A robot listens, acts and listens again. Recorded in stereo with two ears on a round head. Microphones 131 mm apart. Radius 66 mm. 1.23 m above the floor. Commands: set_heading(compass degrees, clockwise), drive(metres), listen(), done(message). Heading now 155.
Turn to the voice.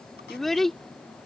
set_heading(125)
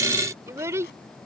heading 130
set_heading(150)
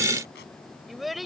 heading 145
done("Found it: a child speaking, straight ahead.")